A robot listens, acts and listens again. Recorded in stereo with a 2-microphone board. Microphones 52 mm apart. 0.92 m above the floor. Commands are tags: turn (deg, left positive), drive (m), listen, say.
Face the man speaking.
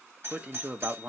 <turn deg="-30"/>
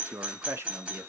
<turn deg="-115"/>
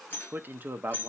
<turn deg="-45"/>
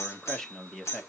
<turn deg="10"/>
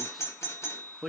<say>Found it: a man speaking, straight ahead.</say>